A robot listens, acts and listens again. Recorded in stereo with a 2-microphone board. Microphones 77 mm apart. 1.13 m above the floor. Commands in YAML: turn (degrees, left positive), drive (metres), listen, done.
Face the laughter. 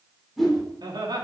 turn: -90
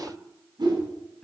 turn: 10
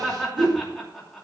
done: "Found it: laughter, straight ahead."